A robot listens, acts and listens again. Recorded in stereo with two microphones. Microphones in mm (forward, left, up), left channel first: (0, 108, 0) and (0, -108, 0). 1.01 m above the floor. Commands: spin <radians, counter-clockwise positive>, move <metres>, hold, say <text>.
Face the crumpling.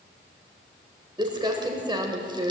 spin -0.35
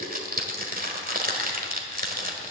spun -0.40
spin -2.36
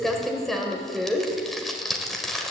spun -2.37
say Facing the crumpling.